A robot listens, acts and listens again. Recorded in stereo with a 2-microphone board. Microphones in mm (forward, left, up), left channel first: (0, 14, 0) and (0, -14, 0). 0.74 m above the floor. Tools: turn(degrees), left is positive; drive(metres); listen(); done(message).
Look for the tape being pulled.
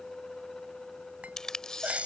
turn(degrees=25)
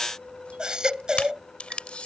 turn(degrees=130)
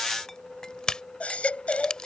turn(degrees=35)
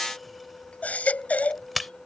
done("Found it: tape being pulled, straight ahead.")